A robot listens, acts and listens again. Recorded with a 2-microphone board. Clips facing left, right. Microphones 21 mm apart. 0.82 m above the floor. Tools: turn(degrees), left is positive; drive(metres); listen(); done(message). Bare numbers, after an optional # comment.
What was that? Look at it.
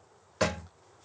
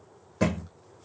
# The thud: about 40° left or 140° left.
turn(40)
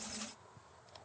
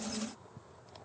listen()
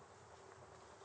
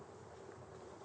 done("I heard a thud, but can't make it out now. It was about straight ahead or 100° left.")